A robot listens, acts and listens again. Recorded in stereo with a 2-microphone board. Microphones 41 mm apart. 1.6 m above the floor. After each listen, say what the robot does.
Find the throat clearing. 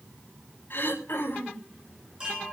Turn 60° left.
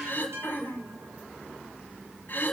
Turn 55° left.
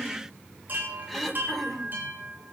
Found it: throat clearing, straight ahead, over 4 m away.